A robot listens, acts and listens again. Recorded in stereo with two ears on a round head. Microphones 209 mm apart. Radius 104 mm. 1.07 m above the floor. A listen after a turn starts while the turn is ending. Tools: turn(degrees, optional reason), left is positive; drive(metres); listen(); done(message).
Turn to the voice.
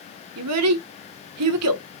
turn(degrees=-75, reason="The child speaking: about 75° right or 105° right.")
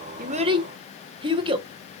turn(degrees=-20, reason="So it is at 20° right.")
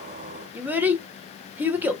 turn(degrees=-10, reason="The child speaking is now 10° right.")
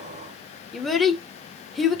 done("Facing the child speaking.")